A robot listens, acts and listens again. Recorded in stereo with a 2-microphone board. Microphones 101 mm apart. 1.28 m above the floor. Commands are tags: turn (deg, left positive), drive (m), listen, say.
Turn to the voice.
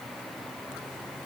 <listen/>
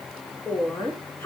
<turn deg="25"/>
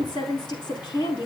<turn deg="130"/>
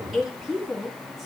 <say>Facing the woman speaking, over 4 m away.</say>